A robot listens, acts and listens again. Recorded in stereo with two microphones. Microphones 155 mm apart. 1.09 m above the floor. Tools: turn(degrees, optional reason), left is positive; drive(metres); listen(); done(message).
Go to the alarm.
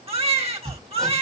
listen()
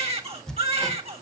listen()
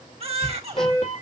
turn(degrees=45, reason="The alarm: about 45° left or 135° left.")
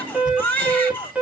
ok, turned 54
turn(degrees=-10, reason="So it is at 10° right.")
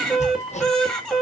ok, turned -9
drive(metres=1.0)
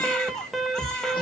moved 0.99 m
drive(metres=1.0)
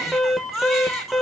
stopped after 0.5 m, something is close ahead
done("Arrived at the alarm, straight ahead.")